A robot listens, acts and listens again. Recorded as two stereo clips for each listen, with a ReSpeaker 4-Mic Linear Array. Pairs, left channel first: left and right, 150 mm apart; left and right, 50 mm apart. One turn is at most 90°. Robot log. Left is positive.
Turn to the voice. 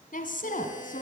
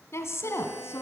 note: The woman speaking: about 65° left or 115° left.
cmd yaw +65
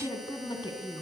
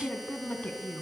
note: So it is at 35° left.
cmd yaw +35
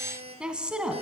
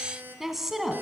end: Found it: a woman speaking, straight ahead.